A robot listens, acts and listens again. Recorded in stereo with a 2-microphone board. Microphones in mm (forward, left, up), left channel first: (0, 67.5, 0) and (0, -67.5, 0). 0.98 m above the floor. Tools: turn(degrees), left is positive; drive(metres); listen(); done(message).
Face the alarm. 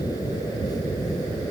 listen()
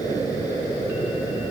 listen()
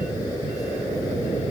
done("I can't make out an alarm to turn to.")